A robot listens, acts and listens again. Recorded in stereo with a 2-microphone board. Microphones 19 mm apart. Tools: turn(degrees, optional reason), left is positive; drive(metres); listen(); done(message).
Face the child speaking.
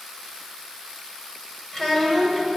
turn(degrees=35, reason="The child speaking: about 35° left or 145° left.")
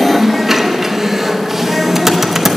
listen()
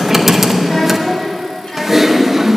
turn(degrees=115, reason="So it is at 115° left.")
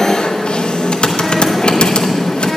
listen()
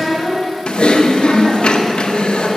turn(degrees=35, reason="The child speaking is now 35° left.")
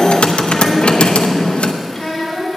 turn(degrees=15, reason="The child speaking is now 15° left.")
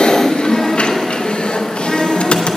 turn(degrees=10, reason="The child speaking is now 10° left.")
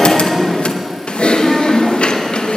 listen()
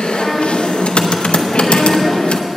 listen()
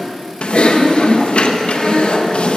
done("Facing where the child speaking came from. I can't hear it now.")